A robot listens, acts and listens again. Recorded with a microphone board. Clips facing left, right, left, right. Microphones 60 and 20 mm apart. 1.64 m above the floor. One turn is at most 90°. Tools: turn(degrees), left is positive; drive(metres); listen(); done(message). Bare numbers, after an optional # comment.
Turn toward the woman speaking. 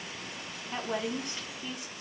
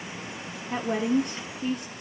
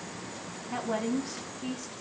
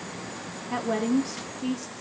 # The woman speaking: about 55° right or 125° right.
turn(-55)
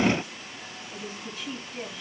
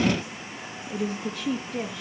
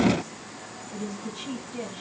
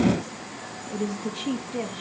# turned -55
# So it is at 70° right.
turn(-70)
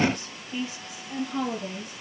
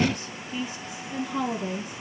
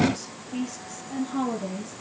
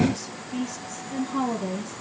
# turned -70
done("Found it: a woman speaking, straight ahead, 2 to 4 m away.")